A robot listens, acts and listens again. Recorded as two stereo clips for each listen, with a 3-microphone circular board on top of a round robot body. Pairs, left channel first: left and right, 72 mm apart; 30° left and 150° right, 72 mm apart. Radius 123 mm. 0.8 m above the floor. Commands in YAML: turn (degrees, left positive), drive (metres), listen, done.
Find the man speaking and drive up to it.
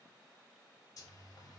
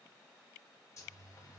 listen: true
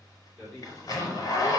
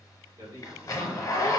turn: -170
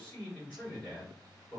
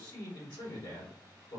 turn: 20
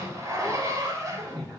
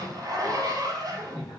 listen: true
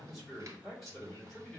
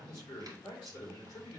drive: 1.0
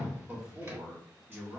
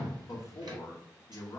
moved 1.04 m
turn: -10
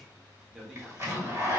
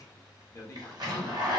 drive: 1.0
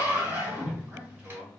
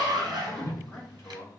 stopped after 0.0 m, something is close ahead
turn: -10
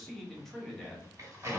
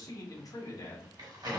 done: "Arrived at the man speaking, straight ahead."